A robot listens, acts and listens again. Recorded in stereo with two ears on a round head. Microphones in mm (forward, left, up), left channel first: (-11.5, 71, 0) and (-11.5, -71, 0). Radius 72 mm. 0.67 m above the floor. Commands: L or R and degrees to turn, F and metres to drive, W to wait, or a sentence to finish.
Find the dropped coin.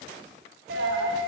R90
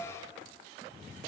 Facing where the dropped coin came from. I can't hear it now.